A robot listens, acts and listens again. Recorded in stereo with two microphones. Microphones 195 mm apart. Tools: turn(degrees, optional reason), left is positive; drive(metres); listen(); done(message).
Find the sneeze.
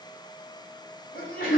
turn(degrees=50, reason="The sneeze: about 50° left or 130° left.")
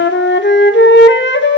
listen()
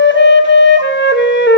done("I heard a sneeze, but can't make it out now. It was about straight ahead or 80° left.")